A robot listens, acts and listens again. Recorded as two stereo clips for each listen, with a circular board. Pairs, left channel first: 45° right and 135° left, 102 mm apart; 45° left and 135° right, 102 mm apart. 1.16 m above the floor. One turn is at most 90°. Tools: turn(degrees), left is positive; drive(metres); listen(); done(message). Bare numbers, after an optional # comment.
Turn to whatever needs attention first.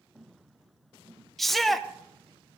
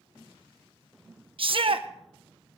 # The shout: 135° right.
turn(-90)
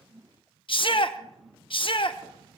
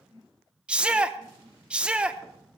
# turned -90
# The shout is now 55° right.
turn(-55)
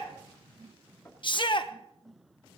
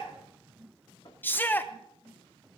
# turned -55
# The shout is now 25° right.
turn(-25)
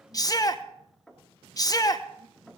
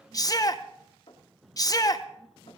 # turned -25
done("Facing the shout.")